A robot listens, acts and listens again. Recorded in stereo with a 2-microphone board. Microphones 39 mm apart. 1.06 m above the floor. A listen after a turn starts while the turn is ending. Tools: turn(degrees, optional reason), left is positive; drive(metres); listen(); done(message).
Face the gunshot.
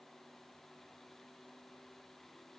listen()
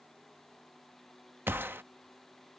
turn(degrees=-70, reason="The gunshot: about 70° right or 110° right.")
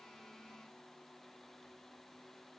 listen()
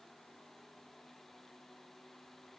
done("I heard a gunshot, but can't make it out now. It was about straight ahead or 40° right.")